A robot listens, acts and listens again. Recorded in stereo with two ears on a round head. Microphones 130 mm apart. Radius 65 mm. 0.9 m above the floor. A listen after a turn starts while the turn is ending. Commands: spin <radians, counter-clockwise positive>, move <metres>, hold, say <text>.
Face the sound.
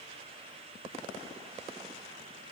hold
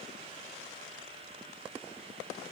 hold
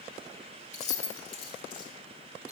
spin 0.70
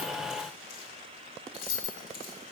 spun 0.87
spin 2.01
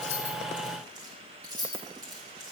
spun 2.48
spin -0.52
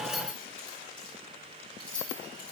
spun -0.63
spin 0.17
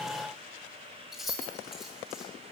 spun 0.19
say Facing the keys jangling, 1 to 2 m away.